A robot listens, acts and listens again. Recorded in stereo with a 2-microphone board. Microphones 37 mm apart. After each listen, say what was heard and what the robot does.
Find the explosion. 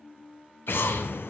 Turn 90° left.
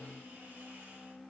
I heard an explosion from this way, but can't make it out now.